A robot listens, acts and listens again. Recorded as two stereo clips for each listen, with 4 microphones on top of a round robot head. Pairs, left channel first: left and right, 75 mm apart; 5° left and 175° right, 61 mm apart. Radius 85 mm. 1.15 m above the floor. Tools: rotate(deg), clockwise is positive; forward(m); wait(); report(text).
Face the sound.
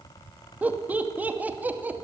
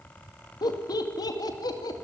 rotate(20)
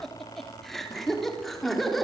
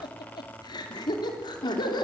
report("Found it: laughter, straight ahead, 2 to 4 m away.")